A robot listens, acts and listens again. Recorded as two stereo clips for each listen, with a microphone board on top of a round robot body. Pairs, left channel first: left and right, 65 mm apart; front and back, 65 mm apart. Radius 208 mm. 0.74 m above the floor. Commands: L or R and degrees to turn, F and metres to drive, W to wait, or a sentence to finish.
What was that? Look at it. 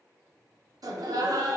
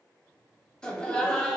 R75
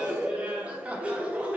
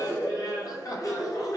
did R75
R20
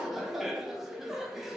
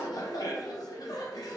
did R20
Facing the laughter, under 1 m away.